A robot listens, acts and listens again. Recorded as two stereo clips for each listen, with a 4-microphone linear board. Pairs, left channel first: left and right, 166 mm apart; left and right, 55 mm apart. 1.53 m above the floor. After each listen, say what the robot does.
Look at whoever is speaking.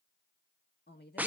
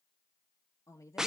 Turn 90° left.
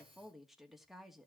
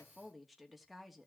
Found it: a woman speaking, straight ahead, 2 to 4 m away.